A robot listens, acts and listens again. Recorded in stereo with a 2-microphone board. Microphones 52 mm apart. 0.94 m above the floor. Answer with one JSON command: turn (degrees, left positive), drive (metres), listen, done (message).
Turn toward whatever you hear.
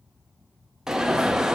{"turn": -30}
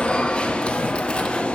{"turn": 20}
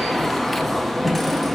{"done": "Facing the alarm, under 1 m away."}